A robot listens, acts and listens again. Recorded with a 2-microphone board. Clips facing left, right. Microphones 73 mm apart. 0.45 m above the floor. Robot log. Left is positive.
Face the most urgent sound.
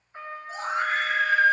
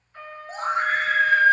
note: The scream: about 50° right or 130° right.
cmd yaw -50
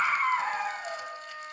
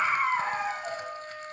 note: So it is at 10° right.
cmd yaw -10
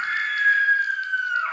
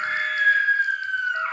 end: Facing the scream, 2 to 4 m away.